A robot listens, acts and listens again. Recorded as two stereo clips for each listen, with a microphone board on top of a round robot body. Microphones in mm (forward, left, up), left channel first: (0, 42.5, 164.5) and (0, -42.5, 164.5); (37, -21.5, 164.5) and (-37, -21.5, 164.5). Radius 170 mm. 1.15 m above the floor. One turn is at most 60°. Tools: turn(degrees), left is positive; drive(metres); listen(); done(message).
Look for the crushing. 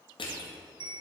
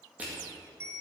turn(degrees=60)
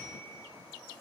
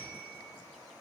turn(degrees=50)
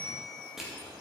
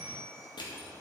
done("Found it: crushing, straight ahead.")